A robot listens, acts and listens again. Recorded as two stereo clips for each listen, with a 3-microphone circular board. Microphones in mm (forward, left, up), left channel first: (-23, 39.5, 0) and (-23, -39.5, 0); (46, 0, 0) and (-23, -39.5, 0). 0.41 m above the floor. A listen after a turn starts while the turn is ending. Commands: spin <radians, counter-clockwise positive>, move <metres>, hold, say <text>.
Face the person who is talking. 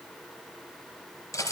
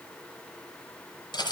hold
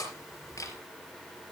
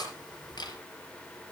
hold
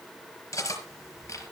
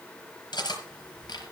say I can't make out anyone speaking to turn to.